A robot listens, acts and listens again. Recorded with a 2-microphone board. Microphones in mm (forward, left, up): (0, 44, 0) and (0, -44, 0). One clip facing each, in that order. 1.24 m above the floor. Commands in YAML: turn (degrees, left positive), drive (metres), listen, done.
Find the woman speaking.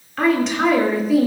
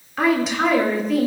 turn: 30
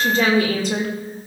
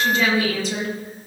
turn: 125
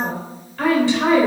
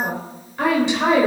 turn: -20
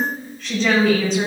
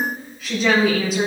done: "Facing the woman speaking."